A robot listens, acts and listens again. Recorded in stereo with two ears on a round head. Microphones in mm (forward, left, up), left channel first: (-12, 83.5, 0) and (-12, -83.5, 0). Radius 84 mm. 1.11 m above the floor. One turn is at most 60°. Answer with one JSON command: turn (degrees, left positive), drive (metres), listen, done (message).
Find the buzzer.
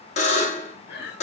{"turn": 35}
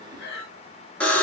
{"done": "Found it: a buzzer, straight ahead."}